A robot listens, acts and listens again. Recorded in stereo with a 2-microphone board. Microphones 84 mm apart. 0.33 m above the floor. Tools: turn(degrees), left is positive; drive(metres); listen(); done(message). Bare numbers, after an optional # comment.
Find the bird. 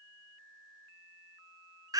listen()
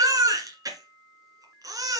listen()
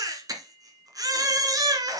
done("I can't make out a bird to turn to.")